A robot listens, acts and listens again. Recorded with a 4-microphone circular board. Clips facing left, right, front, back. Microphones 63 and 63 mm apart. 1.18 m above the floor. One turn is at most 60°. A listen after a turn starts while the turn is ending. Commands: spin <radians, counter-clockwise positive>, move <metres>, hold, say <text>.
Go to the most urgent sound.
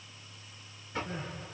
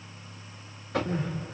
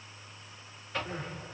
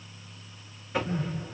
spin -1.05
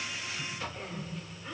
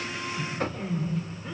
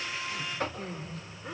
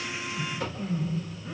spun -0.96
move 1.0
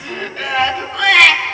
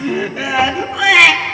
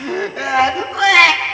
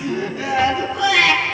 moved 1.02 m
move 1.0
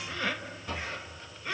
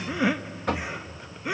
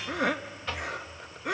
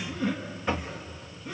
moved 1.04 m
spin -0.26
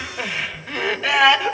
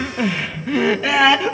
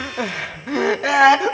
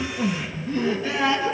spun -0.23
move 1.0
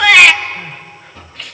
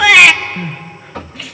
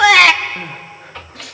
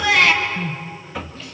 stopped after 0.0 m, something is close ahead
say I am next to the crying.